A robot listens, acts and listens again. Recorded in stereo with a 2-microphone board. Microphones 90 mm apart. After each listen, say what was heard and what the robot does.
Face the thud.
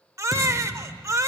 The thud: about 40° left or 140° left. Turn 40° left.
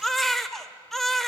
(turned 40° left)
Keep listening.
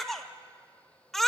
I heard a thud, but can't make it out now. It was about straight ahead or 100° left.